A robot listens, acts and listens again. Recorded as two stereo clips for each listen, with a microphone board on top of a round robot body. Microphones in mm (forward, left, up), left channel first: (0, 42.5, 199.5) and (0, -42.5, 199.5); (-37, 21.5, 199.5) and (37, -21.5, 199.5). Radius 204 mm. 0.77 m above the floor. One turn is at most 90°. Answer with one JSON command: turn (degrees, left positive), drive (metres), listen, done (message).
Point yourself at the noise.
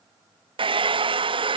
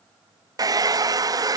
{"turn": -75}
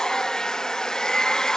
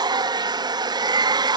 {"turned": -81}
{"done": "Found it: a hair dryer, straight ahead."}